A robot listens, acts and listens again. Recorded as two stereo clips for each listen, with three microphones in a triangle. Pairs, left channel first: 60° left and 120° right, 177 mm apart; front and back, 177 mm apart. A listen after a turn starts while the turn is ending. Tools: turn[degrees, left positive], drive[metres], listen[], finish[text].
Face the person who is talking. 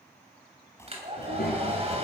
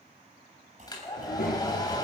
Thought: The child speaking: 35° left.
Action: turn[35]
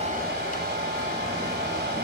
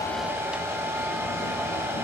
Action: listen[]
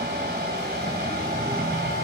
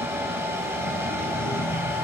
Action: finish[Facing the child speaking, over 4 m away.]